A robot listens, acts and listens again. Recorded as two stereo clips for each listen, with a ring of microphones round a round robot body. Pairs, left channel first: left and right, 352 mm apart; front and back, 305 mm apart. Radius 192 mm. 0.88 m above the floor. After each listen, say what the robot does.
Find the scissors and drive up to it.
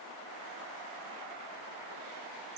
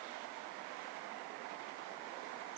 Keep listening.
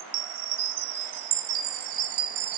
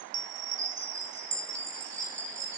Keep listening.
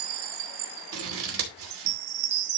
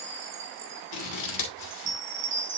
Turn 35° right.
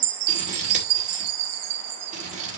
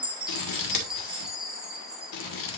Turn 20° right.
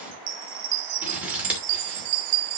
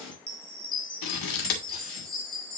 Drive 1.0 m forward.
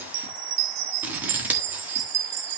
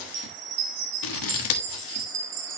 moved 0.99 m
Drive 1.0 m forward.
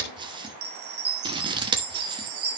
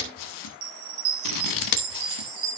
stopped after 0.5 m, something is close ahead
Turn 10° right.
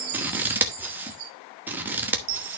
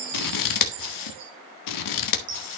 I am next to the scissors.